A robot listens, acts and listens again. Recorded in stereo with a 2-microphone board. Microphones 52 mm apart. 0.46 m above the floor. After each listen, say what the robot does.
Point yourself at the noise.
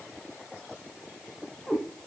Turn 30° left.
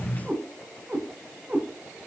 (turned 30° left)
Turn 25° right.
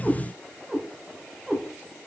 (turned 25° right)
Facing the cat meowing.